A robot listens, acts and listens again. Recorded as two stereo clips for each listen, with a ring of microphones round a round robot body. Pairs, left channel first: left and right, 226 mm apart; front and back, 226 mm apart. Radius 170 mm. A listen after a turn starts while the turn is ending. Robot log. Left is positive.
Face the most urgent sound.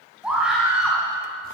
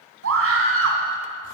note: The scream: 175° right.
cmd yaw -175
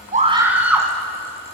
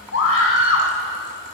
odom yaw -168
end: Facing the scream.